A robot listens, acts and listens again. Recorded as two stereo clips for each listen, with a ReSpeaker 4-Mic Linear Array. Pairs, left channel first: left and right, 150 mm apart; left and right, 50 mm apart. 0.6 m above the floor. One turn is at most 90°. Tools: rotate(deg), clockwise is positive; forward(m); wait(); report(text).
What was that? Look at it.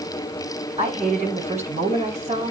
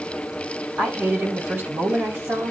rotate(55)
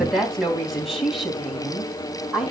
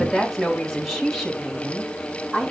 report("Found it: a woman speaking, straight ahead, 2 to 4 m away.")